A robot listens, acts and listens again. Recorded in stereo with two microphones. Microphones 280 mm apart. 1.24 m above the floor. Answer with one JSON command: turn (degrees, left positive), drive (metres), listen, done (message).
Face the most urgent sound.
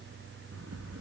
{"listen": true}
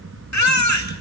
{"turn": 75}
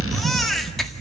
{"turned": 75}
{"listen": true}
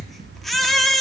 {"done": "Found it: a baby crying, straight ahead."}